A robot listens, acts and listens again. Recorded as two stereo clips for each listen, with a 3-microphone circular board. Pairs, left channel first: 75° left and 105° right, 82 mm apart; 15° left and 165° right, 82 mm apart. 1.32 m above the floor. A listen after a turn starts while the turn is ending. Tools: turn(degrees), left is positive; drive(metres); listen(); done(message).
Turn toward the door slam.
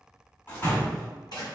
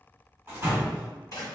turn(degrees=135)
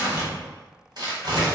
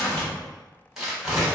done("I heard a door slam from this way, but can't make it out now.")